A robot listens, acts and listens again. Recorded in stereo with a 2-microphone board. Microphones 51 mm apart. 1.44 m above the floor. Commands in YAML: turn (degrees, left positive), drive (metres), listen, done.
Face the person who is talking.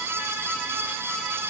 listen: true
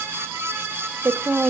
turn: -60
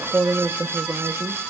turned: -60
turn: -65
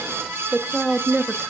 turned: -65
done: "Facing the woman speaking, 1 to 2 m away."